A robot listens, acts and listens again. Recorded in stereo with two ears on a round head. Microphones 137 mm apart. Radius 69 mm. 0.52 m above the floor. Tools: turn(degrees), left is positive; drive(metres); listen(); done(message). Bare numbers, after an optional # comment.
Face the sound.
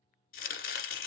# The chopping: about 65° left or 115° left.
turn(65)
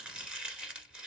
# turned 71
done("Found it: chopping, straight ahead, 1 to 2 m away.")